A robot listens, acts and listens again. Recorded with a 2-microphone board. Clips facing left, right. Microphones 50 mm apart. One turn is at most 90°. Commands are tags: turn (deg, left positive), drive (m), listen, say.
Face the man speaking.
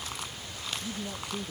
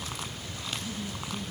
<turn deg="65"/>
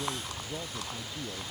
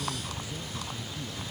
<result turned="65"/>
<turn deg="45"/>
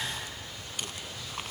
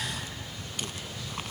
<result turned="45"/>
<listen/>
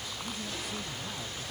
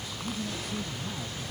<say>Found it: a man speaking, straight ahead.</say>